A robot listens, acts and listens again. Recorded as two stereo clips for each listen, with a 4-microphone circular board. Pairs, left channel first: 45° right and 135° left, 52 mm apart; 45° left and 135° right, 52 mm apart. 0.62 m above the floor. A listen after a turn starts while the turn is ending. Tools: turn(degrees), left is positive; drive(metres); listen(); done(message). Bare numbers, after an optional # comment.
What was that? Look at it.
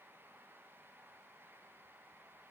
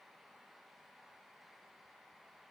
listen()
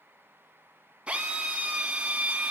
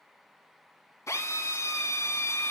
# The drill: 65° left.
turn(65)
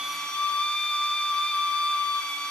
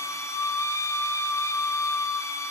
# The drill is now 25° left.
turn(25)
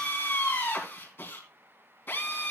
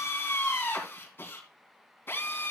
done("Facing the drill, 2 to 4 m away.")